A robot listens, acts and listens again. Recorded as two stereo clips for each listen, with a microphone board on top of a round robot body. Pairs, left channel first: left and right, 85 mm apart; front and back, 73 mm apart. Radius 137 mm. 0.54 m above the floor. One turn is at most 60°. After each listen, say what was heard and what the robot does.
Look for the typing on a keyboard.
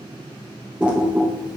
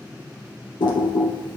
The typing on a keyboard: 10° right. Turn 10° right.
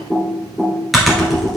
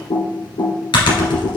Facing the typing on a keyboard.